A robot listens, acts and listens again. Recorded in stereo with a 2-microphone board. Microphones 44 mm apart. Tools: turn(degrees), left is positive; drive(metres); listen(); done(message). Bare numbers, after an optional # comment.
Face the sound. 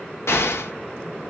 turn(90)
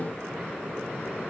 done("Facing where the explosion came from. I can't hear it now.")